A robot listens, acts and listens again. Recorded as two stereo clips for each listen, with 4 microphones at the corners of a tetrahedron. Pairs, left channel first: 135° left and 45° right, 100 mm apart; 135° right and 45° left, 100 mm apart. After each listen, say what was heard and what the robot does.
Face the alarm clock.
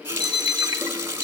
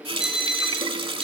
The alarm clock: 125° left. Turn 125° left.
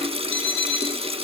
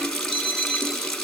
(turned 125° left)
The alarm clock is now 60° left. Turn 60° left.
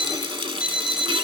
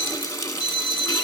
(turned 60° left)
The alarm clock is now 35° left. Turn 35° left.
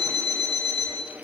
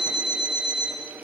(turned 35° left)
Found it: an alarm clock, straight ahead, over 4 m away.